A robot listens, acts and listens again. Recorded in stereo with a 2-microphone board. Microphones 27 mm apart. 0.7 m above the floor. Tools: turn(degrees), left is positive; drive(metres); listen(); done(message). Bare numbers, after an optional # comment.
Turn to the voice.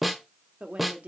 # The woman speaking: about 60° right or 120° right.
turn(-60)
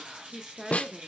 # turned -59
# So it is at 20° right.
turn(-20)
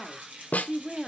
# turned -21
done("Facing the woman speaking.")